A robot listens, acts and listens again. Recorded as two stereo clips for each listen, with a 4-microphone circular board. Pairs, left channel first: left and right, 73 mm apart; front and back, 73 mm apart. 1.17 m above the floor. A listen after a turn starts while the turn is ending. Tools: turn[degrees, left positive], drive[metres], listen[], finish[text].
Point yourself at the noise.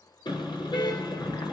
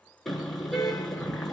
Thought: The car horn: 85° left.
Action: turn[85]
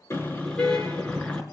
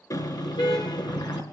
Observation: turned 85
Thought: The car horn is now 15° left.
Action: turn[15]
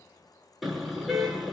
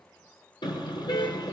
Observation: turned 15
Action: finish[Found it: a car horn, straight ahead.]